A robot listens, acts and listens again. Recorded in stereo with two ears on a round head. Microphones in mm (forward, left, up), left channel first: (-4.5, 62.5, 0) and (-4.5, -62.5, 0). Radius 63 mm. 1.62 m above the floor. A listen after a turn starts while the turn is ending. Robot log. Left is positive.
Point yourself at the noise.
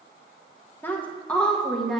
cmd yaw +30
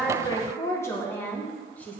cmd yaw +30
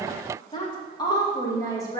note: So it is at 155° left.
cmd yaw +155
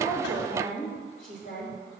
note: The woman speaking is now 60° left.
cmd yaw +60
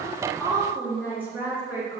note: The woman speaking is now 15° right.
cmd yaw -15
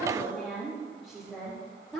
end: Facing the woman speaking.